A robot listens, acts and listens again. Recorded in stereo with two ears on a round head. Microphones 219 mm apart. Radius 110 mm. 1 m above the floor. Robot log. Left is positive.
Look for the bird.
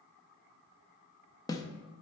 cmd idle
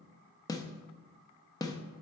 cmd idle
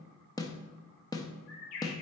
note: The bird: about 65° left or 115° left.
cmd yaw +65
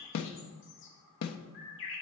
note: So it is at 50° left.
cmd yaw +50
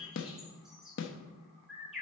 end: Found it: a bird, straight ahead, 2 to 4 m away.